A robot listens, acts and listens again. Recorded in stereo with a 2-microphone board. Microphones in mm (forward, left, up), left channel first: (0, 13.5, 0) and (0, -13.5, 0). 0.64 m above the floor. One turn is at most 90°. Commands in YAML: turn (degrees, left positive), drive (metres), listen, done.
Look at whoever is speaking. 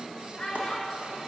turn: 35
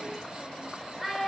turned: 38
done: "Found it: a child speaking, straight ahead."